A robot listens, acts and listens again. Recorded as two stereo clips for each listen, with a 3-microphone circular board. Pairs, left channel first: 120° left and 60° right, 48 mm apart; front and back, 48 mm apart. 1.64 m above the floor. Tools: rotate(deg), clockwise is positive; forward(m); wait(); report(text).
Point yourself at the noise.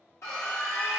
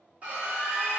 rotate(-120)
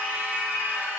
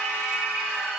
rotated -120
rotate(10)
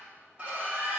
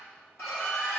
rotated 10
report("Facing the scream, 1 to 2 m away.")